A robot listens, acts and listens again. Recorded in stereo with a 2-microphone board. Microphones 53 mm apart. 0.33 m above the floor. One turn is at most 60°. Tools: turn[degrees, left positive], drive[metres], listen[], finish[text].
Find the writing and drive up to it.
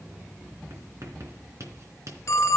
Thought: The writing: about 60° right or 120° right.
Action: turn[-60]
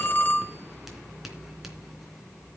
Action: listen[]
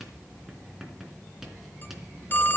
Action: drive[1.0]
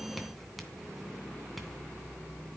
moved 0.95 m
Action: drive[1.0]
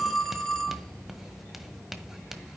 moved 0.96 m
Action: drive[1.0]
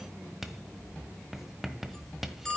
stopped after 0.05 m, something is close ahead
Action: finish[Arrived at the writing, straight ahead.]